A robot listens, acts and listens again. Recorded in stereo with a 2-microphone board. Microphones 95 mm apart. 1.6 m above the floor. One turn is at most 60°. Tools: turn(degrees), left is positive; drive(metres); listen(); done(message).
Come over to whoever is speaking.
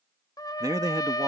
turn(degrees=-40)
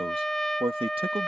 turn(degrees=-60)
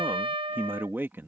turn(degrees=-25)
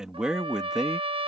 turn(degrees=-10)
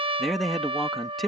drive(metres=1.0)
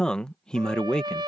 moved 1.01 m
turn(degrees=10)
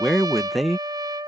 drive(metres=1.0)
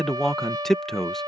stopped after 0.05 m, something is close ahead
done("I am next to the man speaking.")